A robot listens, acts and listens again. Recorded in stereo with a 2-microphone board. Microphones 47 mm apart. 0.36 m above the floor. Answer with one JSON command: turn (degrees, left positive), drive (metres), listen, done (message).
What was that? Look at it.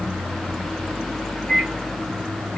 {"turn": 30}
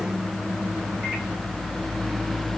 {"listen": true}
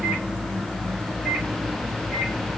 {"listen": true}
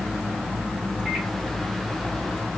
{"done": "I heard a microwave, but can't make it out now. It was about 20° right or 140° left."}